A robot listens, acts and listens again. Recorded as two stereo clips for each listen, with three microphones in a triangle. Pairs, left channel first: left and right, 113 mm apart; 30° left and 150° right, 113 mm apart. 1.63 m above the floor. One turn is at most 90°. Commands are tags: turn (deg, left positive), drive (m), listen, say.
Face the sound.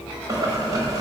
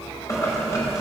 <turn deg="-30"/>
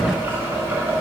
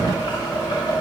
<turn deg="-20"/>
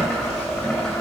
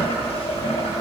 <say>Found it: boiling, straight ahead, over 4 m away.</say>